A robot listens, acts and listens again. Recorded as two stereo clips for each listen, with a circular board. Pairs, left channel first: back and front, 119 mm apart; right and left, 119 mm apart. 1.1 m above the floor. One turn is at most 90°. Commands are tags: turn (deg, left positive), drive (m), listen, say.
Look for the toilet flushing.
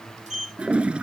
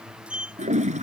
<turn deg="80"/>
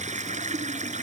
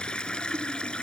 <turn deg="-10"/>
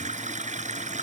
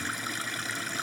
<say>Facing the toilet flushing.</say>